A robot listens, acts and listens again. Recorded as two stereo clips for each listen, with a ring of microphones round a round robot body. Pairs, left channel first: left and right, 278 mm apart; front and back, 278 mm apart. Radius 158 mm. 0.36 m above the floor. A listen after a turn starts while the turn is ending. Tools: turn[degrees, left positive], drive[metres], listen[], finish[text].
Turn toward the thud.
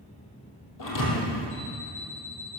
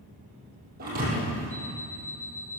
Thought: The thud: 115° left.
Action: turn[115]
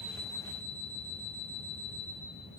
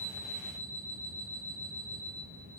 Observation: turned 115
Action: finish[I heard a thud from this way, but can't make it out now.]